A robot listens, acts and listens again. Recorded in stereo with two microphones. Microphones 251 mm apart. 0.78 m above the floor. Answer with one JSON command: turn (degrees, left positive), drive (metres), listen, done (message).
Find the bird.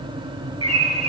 {"turn": 70}
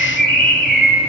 {"turn": 40}
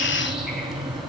{"listen": true}
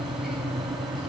{"listen": true}
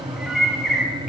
{"done": "Found it: a bird, straight ahead."}